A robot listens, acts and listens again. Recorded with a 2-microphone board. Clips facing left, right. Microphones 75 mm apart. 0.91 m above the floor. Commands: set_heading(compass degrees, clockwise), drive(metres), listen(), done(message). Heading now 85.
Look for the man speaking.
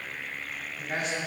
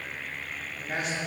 set_heading(115)
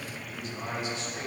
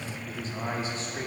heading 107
set_heading(242)
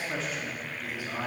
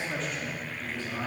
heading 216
set_heading(201)
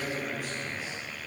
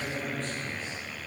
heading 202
set_heading(187)
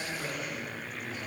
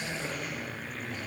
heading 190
done("Facing the man speaking, 1 to 2 m away.")